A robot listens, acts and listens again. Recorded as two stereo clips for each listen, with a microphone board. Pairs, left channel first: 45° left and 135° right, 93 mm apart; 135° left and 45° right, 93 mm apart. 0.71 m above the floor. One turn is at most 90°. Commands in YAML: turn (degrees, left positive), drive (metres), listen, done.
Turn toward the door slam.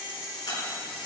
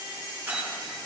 turn: 25
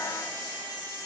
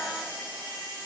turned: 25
done: "I heard a door slam from this way, but can't make it out now."